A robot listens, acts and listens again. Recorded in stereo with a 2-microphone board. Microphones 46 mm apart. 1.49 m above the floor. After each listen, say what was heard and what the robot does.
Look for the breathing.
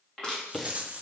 Turn 30° left.
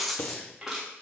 So it is at 145° left. Turn 145° left.
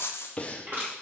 The breathing is now 25° left. Turn 25° left.
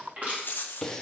The breathing is now 10° left. Turn 10° left.
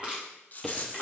Facing the breathing.